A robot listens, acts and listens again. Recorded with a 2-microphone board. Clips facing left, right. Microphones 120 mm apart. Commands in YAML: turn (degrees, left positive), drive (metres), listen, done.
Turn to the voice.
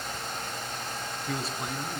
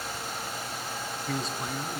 turn: 30
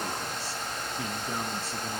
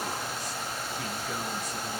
listen: true
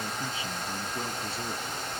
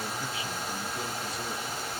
listen: true
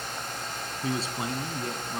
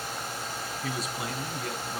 turn: 150
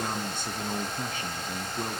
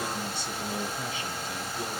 turn: 55
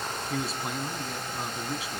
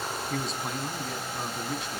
done: "Facing the man speaking, 2 to 4 m away."